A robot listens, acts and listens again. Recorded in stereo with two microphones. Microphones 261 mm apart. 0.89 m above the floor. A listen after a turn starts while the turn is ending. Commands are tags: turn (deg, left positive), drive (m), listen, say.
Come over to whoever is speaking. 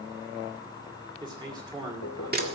<turn deg="-15"/>
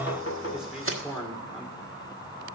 <drive m="1.0"/>
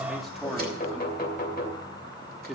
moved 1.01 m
<drive m="1.0"/>
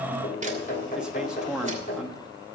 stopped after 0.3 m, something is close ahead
<say>Arrived at the man speaking, straight ahead.</say>